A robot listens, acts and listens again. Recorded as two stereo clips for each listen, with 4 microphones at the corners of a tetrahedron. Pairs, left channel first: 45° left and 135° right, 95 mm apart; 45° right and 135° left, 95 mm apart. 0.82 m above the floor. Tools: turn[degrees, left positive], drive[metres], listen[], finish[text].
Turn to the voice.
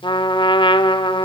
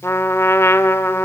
Action: listen[]
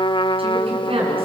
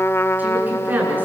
Thought: The woman speaking: 155° right.
Action: turn[-155]
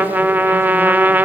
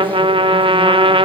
Action: listen[]
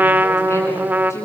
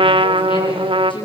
Thought: The woman speaking is now 15° right.
Action: turn[-15]
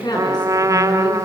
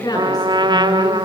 Action: finish[Facing the woman speaking.]